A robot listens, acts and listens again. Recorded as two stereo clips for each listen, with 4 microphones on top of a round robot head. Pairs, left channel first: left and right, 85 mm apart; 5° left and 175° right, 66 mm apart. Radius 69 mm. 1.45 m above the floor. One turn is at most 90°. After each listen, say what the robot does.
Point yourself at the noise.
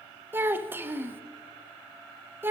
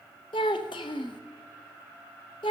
Turn 25° right.
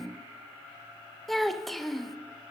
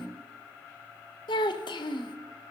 Facing the child speaking, 1 to 2 m away.